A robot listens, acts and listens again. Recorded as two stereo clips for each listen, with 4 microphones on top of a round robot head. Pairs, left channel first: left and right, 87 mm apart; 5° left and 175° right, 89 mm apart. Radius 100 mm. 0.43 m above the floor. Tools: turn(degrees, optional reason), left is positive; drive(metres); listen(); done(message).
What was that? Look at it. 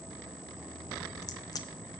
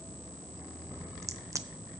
turn(degrees=130, reason="The crack: 130° left.")
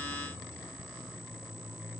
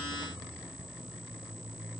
done("Facing where the crack came from. I can't hear it now.")